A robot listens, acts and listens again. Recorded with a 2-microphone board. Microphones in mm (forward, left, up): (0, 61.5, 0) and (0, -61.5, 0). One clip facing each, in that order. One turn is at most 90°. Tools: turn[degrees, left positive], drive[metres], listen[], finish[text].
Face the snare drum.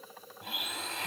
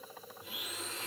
Action: listen[]
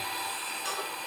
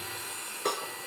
Thought: The snare drum: about 65° right or 115° right.
Action: turn[-65]
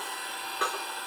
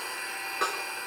Action: finish[Facing the snare drum, over 4 m away.]